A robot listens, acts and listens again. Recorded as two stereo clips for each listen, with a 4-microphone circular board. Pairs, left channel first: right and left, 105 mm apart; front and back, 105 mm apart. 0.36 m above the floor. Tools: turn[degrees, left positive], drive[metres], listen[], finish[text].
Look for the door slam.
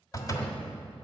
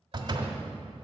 Thought: The door slam: 140° right.
Action: turn[-140]
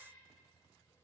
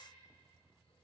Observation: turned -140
Action: finish[Facing where the door slam came from. I can't hear it now.]